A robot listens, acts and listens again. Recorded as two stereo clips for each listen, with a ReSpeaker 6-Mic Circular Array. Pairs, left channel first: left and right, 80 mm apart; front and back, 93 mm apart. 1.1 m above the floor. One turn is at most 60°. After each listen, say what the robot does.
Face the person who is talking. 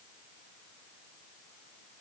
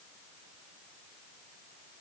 Keep listening.
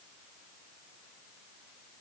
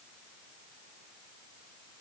Keep listening.
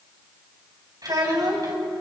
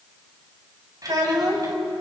Turn 60° right.
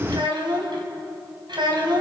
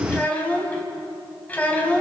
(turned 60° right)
Turn 60° right.
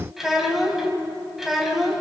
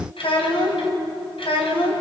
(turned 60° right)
Facing the child speaking.